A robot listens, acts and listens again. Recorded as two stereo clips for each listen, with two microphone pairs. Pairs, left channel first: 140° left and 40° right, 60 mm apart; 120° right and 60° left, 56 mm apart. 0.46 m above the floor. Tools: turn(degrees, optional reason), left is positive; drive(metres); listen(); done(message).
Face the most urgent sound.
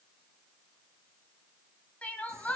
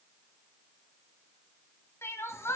turn(degrees=-155, reason="The crying: 155° right.")
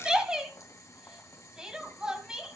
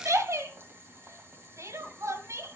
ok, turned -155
turn(degrees=35, reason="The crying is now 35° left.")
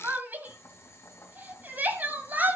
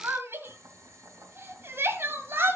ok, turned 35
turn(degrees=20, reason="The crying is now 20° left.")
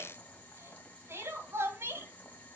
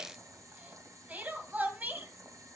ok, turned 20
done("Found it: crying, straight ahead.")